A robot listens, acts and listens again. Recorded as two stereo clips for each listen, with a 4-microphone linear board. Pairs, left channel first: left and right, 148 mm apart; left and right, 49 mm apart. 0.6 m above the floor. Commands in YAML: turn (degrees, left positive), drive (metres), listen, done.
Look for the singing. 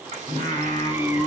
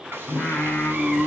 turn: 20
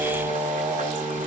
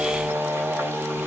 turn: -20
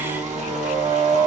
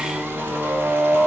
turn: -30
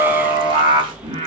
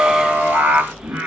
turn: -40
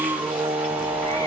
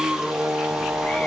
turn: -20
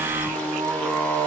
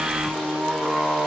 done: "Found it: singing, straight ahead."